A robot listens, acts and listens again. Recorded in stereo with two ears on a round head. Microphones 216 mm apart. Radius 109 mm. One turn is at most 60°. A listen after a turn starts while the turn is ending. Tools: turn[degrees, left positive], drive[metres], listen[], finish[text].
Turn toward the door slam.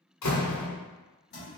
Action: turn[60]
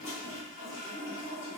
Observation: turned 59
Thought: Nothing new. It was at 30° left.
Action: turn[30]
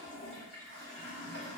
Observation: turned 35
Action: finish[Facing where the door slam came from. I can't hear it now.]